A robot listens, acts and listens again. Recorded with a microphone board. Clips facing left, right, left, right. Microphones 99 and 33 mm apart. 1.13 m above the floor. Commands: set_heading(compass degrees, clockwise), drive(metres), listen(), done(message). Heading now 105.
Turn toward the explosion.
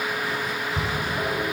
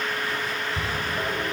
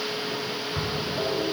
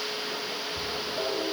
set_heading(35)
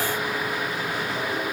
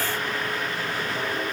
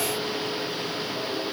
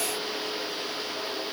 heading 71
listen()
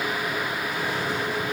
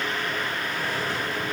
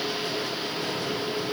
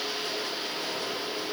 done("I heard an explosion, but can't make it out now. It was about 35° left or 75° left.")